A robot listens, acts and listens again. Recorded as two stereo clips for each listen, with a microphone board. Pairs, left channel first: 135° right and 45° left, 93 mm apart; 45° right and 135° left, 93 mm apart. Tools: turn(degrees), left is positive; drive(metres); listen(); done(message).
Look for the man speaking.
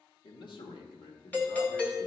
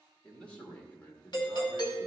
turn(degrees=-115)
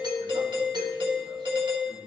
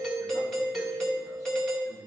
listen()
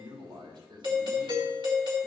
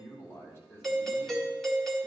turn(degrees=20)
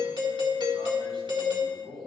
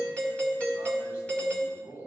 turn(degrees=15)
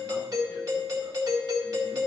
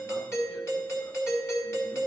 listen()
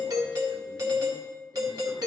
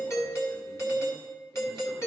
listen()
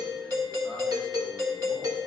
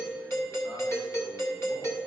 done("I heard a man speaking from this way, but can't make it out now.")